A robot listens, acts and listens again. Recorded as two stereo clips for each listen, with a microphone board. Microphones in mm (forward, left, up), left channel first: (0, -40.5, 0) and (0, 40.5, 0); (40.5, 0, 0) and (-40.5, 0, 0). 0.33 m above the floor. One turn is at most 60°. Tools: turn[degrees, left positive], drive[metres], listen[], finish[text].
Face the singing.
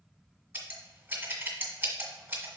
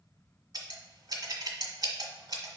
Action: listen[]
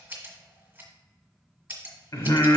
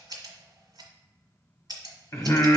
Thought: The singing: 55° right.
Action: turn[-55]
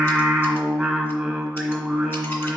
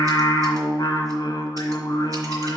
Action: finish[Found it: singing, straight ahead.]